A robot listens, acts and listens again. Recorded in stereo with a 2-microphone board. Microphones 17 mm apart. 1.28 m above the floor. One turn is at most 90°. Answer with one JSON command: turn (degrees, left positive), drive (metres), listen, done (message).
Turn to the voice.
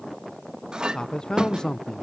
{"turn": 45}
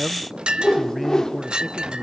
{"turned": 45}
{"done": "Found it: a man speaking, straight ahead."}